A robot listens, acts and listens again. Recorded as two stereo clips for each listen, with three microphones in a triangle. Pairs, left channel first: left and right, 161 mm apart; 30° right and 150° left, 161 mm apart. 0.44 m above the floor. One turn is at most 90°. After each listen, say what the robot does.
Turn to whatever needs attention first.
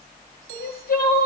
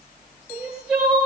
Turn 65° left.
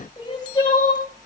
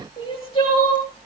Turn 25° left.
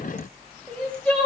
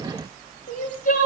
Facing the crying, over 4 m away.